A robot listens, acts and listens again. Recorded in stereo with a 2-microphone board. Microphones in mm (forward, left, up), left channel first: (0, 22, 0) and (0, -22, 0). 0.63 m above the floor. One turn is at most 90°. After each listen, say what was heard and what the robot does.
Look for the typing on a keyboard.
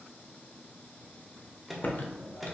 The typing on a keyboard: about 50° left or 130° left. Turn 50° left.
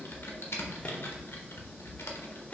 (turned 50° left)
So it is at 80° left. Turn 80° left.
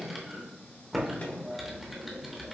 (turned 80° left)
Facing the typing on a keyboard.